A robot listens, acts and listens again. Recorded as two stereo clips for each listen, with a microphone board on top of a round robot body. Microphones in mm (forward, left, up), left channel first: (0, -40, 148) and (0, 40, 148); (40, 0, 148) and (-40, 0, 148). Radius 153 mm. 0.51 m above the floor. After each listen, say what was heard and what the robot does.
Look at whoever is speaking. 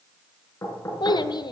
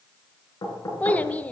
The child speaking: 75° right. Turn 75° right.
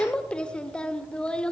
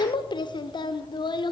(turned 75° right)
The child speaking is now 15° right. Turn 15° right.
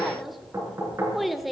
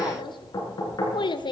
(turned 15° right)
Facing the child speaking.